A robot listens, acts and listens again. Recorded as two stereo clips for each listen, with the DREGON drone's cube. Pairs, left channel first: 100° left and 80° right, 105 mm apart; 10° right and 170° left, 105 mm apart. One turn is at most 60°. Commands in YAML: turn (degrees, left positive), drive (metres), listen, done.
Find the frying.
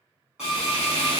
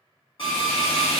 turn: 60
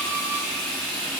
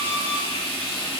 turn: 20
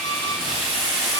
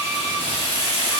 done: "Facing the frying."